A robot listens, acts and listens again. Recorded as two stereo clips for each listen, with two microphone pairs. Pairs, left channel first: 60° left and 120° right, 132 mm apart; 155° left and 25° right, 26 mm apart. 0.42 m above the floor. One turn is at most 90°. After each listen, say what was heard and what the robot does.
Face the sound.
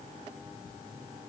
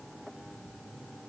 Keep listening.
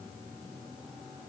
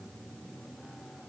Keep listening.
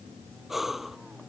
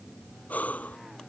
The breathing: 150° left. Turn 90° left.
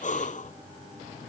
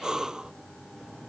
The breathing is now 40° left. Turn 40° left.
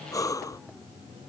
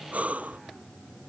Facing the breathing.